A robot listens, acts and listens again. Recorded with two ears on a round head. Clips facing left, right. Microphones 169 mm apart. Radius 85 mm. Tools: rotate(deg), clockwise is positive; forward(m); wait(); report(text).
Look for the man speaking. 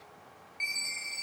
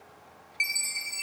wait()
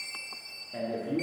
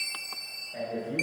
rotate(-55)
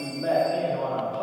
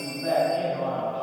rotate(-55)
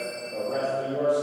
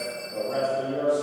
report("Facing the man speaking, 1 to 2 m away.")